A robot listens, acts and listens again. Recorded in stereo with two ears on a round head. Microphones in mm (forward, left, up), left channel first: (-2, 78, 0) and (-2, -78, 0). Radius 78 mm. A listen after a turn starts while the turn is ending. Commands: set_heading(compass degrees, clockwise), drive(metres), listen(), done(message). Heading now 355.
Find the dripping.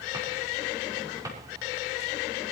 listen()
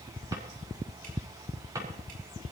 listen()
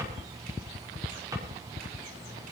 done("I can't make out dripping to turn to.")